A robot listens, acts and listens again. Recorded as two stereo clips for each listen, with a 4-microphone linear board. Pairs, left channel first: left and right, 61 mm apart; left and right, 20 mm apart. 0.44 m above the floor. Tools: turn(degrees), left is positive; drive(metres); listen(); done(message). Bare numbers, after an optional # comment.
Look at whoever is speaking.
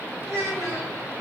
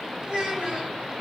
# The child speaking: about 65° right or 115° right.
turn(-65)
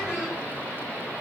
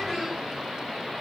listen()
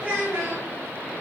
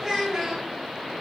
# So it is at 30° right.
turn(-30)
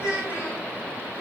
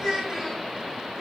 # The child speaking is now 20° right.
turn(-20)
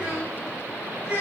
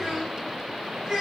# The child speaking is now 25° right.
turn(-25)
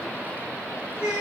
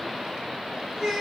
# The child speaking is now 15° right.
turn(-15)
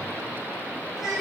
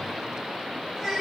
done("Facing the child speaking, 2 to 4 m away.")